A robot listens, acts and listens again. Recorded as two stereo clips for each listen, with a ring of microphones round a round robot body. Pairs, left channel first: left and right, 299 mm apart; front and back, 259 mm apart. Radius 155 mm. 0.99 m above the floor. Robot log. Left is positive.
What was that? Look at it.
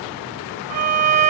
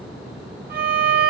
note: The violin: 120° right.
cmd yaw -120
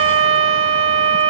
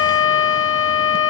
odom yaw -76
note: The violin is now 45° right.
cmd yaw -45
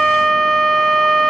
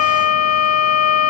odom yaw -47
end: Found it: a violin, straight ahead, 1 to 2 m away.